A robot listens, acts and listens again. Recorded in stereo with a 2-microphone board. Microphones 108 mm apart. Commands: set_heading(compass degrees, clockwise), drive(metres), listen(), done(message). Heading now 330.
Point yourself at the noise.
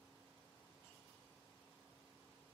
listen()
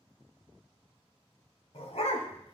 set_heading(240)
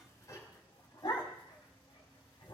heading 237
set_heading(192)
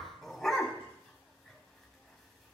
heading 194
done("Found it: a dog barking, straight ahead.")